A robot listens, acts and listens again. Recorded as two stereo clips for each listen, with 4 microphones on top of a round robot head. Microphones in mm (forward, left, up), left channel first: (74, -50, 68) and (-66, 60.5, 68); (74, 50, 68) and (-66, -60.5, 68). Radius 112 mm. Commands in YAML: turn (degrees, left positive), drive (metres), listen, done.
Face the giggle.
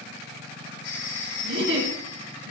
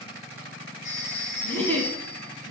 turn: 120
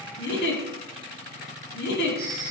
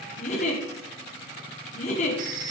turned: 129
turn: -10
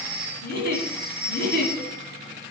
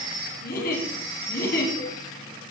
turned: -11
done: "Found it: a giggle, straight ahead, 2 to 4 m away."